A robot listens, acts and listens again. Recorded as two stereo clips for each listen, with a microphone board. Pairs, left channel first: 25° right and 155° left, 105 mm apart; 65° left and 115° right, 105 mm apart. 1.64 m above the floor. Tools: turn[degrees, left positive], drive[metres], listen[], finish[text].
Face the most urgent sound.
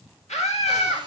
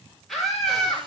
Thought: The scream: 20° right.
Action: turn[-20]
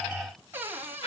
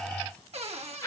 Action: finish[Facing the scream.]